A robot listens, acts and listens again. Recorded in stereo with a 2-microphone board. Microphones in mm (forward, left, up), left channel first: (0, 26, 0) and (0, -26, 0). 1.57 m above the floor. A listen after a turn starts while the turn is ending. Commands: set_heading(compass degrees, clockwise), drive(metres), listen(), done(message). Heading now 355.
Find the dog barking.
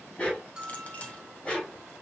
set_heading(325)
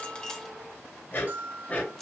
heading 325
set_heading(175)
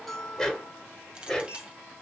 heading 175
set_heading(165)
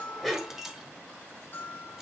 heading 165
done("Found it: a dog barking, straight ahead.")